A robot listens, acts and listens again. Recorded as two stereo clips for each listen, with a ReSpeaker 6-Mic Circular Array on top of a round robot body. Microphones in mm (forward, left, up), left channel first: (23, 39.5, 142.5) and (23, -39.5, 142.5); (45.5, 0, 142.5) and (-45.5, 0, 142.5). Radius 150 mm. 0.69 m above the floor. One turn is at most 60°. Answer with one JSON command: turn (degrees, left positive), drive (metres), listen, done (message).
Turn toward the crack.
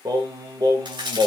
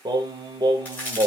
{"turn": -60}
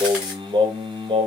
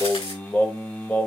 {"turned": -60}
{"turn": -15}
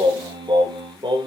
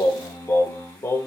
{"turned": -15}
{"done": "Facing where the crack came from. I can't hear it now."}